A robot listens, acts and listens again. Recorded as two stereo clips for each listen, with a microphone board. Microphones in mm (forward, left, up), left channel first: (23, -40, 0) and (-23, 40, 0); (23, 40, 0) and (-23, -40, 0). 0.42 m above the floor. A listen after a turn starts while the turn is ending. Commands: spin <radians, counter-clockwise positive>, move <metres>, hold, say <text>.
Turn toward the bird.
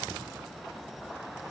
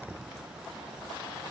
hold
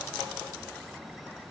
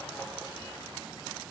hold
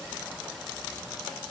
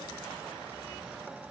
say I can't make out a bird to turn to.